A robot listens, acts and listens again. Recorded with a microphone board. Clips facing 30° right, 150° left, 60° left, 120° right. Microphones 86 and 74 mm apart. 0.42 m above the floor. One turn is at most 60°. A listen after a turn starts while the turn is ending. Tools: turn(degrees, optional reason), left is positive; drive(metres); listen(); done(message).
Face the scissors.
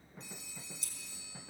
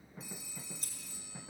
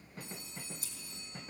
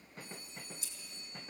turn(degrees=60, reason="The scissors: 105° left.")
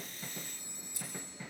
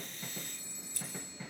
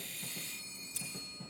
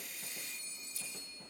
turn(degrees=45, reason="The scissors is now 45° left.")
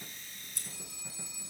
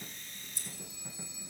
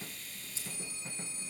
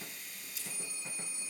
done("Found it: scissors, straight ahead.")